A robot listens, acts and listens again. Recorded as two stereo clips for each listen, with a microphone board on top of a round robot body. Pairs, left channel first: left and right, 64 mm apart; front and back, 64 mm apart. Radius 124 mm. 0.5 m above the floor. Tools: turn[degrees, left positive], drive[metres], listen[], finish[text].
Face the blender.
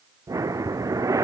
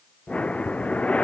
Action: listen[]
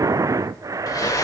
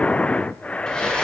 Thought: The blender: 80° left.
Action: turn[80]
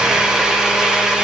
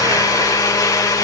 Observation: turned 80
Thought: The blender is now 10° right.
Action: turn[-10]
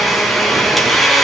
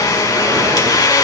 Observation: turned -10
Action: finish[Found it: a blender, straight ahead.]